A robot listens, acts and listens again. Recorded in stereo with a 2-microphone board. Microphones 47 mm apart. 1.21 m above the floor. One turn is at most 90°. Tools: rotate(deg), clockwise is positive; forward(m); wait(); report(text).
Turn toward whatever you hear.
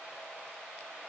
wait()
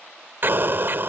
rotate(50)
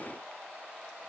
wait()
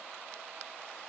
report("I heard an explosion, but can't make it out now. It was about straight ahead or 80° right.")